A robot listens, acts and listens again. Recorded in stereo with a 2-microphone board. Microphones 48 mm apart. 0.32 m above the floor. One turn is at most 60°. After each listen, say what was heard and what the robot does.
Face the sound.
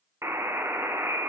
Turn 60° right.
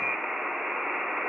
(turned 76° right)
So it is at 10° right. Turn 10° right.
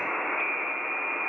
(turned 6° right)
Facing the buzzer.